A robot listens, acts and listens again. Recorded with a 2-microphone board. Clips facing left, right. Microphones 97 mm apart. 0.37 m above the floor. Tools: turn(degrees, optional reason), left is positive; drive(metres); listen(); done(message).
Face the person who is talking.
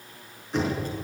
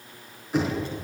turn(degrees=45, reason="The child speaking: about 45° left or 135° left.")
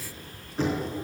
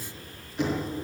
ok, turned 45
turn(degrees=90, reason="So it is at 90° left.")
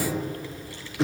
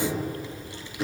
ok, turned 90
turn(degrees=-20, reason="The child speaking is now 20° right.")
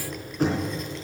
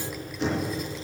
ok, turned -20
done("Facing the child speaking.")